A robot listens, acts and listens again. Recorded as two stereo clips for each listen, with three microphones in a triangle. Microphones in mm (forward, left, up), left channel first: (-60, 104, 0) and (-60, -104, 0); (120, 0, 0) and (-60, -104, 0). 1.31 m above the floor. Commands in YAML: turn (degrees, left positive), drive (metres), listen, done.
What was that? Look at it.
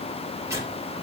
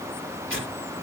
turn: -165
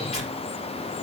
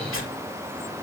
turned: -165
turn: 30
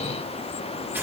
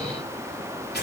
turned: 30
turn: -10
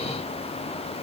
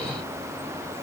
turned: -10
listen: true
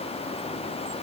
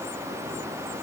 listen: true
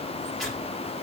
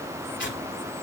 done: "Facing the tearing paper."